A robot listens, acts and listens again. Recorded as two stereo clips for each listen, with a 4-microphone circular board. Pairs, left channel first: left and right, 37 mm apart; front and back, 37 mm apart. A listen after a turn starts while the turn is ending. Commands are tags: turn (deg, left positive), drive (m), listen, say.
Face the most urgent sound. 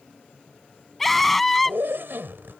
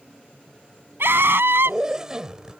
<turn deg="175"/>
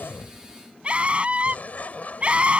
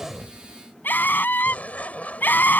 <turn deg="-30"/>
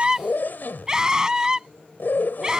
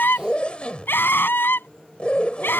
<turn deg="-20"/>
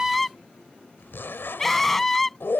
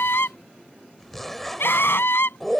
<say>Facing the scream.</say>